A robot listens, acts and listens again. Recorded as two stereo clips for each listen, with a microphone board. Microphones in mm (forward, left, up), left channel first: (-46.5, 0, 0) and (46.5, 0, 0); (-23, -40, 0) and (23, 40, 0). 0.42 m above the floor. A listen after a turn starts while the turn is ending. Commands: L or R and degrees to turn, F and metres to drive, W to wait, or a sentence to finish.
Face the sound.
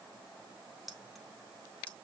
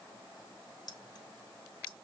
R105
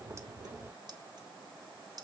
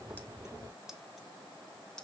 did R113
R40
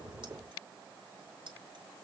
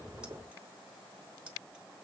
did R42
R15
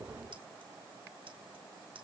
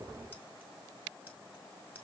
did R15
W
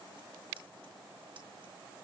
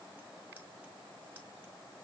W
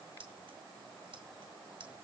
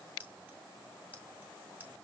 R10
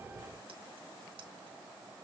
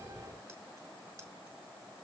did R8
W
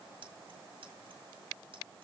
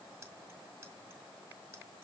Found it: keys jangling, straight ahead, 2 to 4 m away.